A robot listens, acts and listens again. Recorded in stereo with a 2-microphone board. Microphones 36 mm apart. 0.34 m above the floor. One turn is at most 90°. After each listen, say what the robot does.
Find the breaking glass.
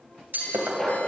Turn 65° right.
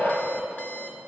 Keep listening.
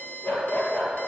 I heard breaking glass, but can't make it out now. It was about straight ahead or 50° right.